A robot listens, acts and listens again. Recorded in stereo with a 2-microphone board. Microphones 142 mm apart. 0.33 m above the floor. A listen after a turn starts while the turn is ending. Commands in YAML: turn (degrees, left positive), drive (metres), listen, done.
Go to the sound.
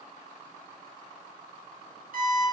turn: -90
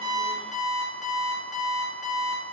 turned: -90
drive: 1.0
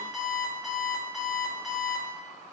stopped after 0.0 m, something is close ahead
done: "Blocked. The alarm clock is further on, straight ahead."